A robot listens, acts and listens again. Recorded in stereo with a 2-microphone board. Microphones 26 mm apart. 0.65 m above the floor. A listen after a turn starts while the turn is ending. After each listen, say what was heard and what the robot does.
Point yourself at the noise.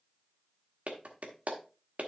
The clap: about 60° right or 120° right. Turn 60° right.
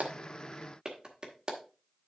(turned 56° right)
So it is at 35° right. Turn 35° right.
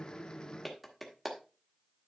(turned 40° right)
Facing the clap.